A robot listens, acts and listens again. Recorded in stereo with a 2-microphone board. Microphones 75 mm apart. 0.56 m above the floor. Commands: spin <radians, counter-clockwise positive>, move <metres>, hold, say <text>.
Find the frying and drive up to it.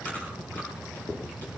hold
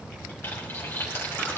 spin 0.52
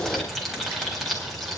move 1.0
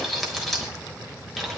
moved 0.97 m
move 1.0
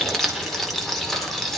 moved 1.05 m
move 1.0
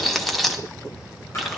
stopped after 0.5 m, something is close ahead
say Arrived at the frying, straight ahead.